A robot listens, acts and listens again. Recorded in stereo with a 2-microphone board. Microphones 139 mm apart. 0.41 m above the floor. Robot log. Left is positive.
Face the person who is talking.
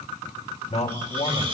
note: The man speaking: about 50° left or 130° left.
cmd yaw +50
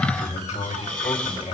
note: So it is at 65° left.
cmd yaw +65
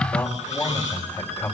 note: The man speaking is now 20° left.
cmd yaw +20
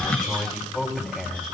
end: Facing the man speaking.